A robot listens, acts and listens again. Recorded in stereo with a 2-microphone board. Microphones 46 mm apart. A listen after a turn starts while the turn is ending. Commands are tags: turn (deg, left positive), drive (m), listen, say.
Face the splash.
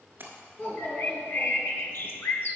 <turn deg="-50"/>
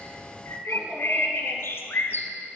<listen/>
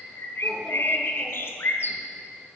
<say>I heard a splash, but can't make it out now. It was about straight ahead or 80° right.</say>